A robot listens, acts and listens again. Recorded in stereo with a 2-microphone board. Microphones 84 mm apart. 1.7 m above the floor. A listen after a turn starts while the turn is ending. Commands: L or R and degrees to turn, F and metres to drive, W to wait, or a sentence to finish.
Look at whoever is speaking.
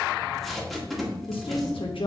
L90
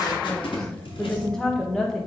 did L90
Facing the woman speaking.